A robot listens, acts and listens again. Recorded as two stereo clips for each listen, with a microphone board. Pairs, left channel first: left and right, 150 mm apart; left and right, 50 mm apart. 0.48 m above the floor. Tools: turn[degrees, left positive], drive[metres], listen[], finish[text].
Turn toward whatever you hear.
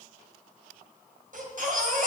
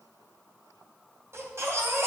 Thought: The baby crying: about 65° right or 115° right.
Action: turn[-65]
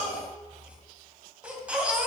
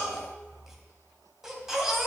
Thought: So it is at 10° right.
Action: turn[-10]
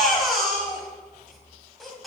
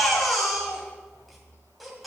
Action: finish[Found it: a baby crying, straight ahead.]